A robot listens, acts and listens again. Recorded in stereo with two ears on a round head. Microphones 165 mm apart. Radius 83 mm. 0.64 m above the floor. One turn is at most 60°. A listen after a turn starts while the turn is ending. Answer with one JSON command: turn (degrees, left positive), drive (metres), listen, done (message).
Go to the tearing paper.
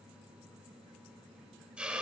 {"listen": true}
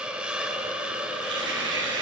{"turn": -60}
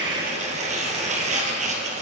{"turn": -40}
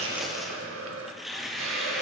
{"drive": 1.0}
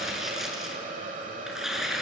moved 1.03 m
{"drive": 1.0}
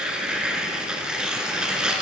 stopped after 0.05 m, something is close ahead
{"done": "Arrived at the tearing paper, straight ahead."}